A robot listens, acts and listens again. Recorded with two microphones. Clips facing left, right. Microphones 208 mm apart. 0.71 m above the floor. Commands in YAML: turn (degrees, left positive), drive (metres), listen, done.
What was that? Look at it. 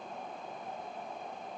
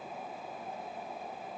listen: true
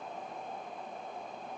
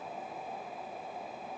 listen: true
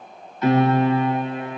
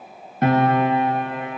turn: -55
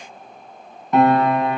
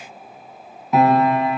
done: "Facing the piano."